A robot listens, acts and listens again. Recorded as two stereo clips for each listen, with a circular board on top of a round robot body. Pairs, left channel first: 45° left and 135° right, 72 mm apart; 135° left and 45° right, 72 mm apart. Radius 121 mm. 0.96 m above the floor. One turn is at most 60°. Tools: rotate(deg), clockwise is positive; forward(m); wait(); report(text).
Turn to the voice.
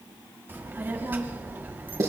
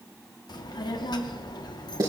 rotate(-60)
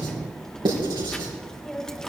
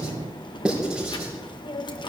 rotate(-60)
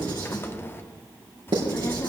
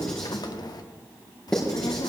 rotate(-60)
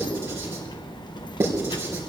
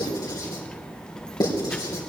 rotate(-55)
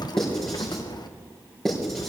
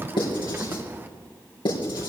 rotate(-20)
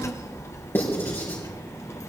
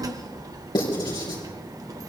report("Facing the child speaking.")